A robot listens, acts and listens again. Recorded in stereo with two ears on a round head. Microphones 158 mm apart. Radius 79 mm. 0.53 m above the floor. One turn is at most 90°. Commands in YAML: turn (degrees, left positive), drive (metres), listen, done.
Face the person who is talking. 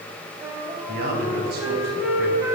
turn: -60
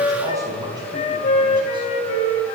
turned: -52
turn: -25
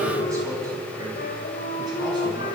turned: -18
turn: -20
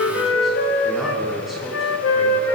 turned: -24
listen: true
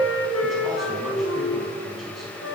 listen: true
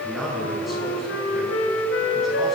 done: "Facing the man speaking."